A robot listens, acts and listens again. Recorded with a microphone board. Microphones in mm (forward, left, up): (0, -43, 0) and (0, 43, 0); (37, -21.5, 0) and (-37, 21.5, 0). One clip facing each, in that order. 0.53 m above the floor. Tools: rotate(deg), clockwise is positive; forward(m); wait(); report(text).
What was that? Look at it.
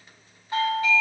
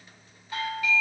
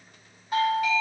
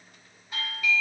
rotate(35)
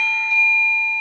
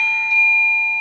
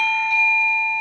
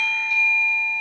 rotate(-15)
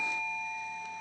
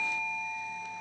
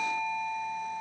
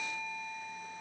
rotate(10)
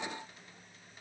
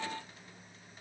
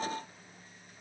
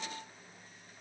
wait()
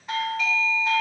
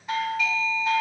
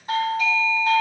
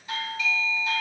report("Found it: a doorbell, straight ahead, 2 to 4 m away.")